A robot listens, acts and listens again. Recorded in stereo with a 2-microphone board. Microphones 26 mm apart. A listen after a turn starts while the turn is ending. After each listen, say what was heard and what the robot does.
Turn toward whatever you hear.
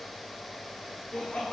The laughter: about 50° left or 130° left. Turn 50° left.
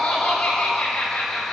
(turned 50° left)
So it is at 65° left. Turn 65° left.
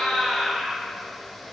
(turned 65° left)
Facing the laughter, 2 to 4 m away.